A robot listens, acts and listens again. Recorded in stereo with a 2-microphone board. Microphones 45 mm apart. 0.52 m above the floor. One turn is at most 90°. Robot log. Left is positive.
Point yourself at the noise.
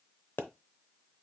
note: The pop: about 55° left or 125° left.
cmd yaw +55
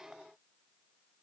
cmd idle
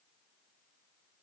end: I heard a pop, but can't make it out now. It was about straight ahead or 70° left.